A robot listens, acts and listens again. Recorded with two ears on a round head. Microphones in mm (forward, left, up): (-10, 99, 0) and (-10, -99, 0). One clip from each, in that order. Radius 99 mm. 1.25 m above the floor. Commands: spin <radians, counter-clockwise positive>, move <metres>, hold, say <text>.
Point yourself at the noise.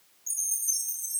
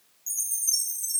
spin -0.44
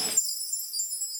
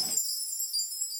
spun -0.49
say Facing the chime, 2 to 4 m away.